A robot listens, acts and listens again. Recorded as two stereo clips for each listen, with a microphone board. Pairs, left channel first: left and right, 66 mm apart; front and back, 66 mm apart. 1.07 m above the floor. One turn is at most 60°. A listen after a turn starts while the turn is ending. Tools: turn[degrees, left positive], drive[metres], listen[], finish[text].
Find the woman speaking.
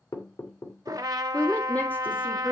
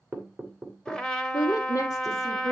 Thought: The woman speaking: 30° left.
Action: turn[30]
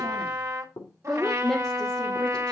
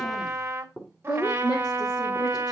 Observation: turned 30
Action: finish[Found it: a woman speaking, straight ahead, 2 to 4 m away.]